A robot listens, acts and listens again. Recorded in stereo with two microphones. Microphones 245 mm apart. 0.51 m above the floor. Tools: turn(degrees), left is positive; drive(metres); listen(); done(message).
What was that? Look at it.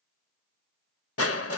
turn(degrees=70)
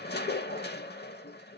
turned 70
turn(degrees=45)
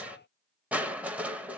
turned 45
done("Found it: crushing, straight ahead.")